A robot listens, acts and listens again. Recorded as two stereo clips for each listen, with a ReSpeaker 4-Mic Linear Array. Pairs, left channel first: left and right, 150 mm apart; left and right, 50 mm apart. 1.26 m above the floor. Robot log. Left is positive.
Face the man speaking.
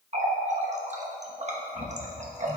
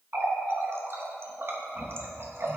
cmd idle
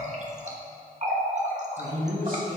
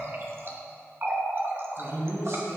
cmd yaw -90
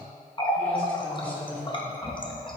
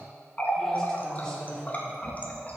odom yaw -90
note: So it is at 10° left.
cmd yaw +10
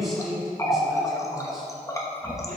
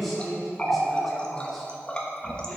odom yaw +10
end: Found it: a man speaking, straight ahead, over 4 m away.